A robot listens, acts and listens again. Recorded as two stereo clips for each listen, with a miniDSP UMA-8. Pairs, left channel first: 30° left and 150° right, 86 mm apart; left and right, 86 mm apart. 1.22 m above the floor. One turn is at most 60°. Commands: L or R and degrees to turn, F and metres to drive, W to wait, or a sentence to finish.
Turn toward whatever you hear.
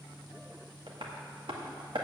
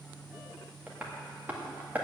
R60
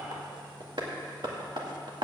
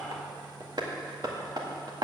R60
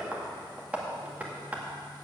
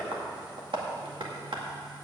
R60
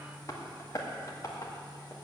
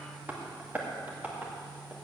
R20
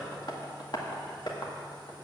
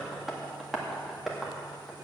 Facing the tapping.